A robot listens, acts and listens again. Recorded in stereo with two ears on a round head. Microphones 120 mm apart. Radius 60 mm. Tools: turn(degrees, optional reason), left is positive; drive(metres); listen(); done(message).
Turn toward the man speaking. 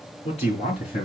turn(degrees=45, reason="The man speaking: about 45° left or 135° left.")
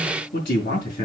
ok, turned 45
turn(degrees=80, reason="So it is at 80° left.")
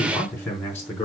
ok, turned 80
turn(degrees=20, reason="The man speaking is now 20° left.")
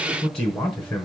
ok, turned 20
turn(degrees=10, reason="The man speaking is now 10° left.")
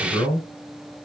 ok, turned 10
done("Found it: a man speaking, straight ahead, over 4 m away.")